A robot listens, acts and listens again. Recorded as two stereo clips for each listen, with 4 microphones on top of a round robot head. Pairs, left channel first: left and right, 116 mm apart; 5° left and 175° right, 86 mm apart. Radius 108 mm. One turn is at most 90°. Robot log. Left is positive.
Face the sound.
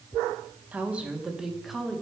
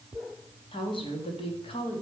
end: Facing the woman speaking.